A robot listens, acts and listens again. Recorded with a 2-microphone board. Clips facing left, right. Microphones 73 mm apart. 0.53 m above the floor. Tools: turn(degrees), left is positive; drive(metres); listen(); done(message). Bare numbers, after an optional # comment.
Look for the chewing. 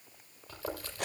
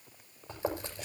# The chewing: about 25° right or 155° right.
turn(-25)
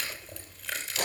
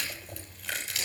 done("Facing the chewing.")